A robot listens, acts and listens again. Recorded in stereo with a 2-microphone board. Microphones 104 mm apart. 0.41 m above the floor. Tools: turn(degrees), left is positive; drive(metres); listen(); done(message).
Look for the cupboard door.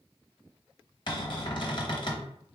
turn(degrees=50)
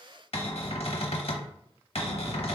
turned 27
turn(degrees=100)
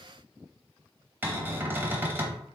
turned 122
turn(degrees=-20)
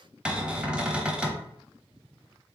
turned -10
turn(degrees=-10)
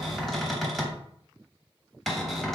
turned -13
done("Facing the cupboard door, under 1 m away.")